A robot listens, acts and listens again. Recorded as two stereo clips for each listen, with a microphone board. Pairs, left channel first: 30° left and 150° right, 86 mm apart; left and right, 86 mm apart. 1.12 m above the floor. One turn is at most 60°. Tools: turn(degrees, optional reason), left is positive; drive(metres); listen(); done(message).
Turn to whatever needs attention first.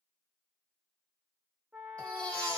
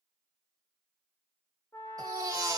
turn(degrees=-45, reason="The baby crying: 45° right.")
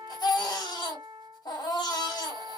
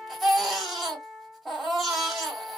done("Found it: a baby crying, straight ahead, 1 to 2 m away.")